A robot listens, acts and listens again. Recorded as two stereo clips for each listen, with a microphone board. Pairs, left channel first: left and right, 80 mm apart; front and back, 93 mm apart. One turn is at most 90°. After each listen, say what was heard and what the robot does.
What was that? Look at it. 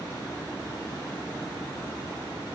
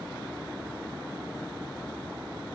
Keep listening.
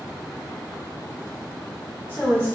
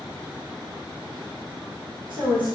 The woman speaking: 155° left. Turn 90° left.
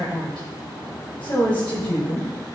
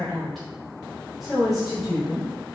The woman speaking is now 90° left. Turn 90° left.
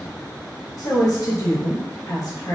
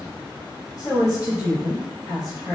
The woman speaking is now 50° left. Turn 50° left.
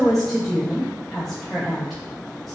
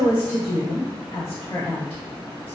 Facing the woman speaking, 1 to 2 m away.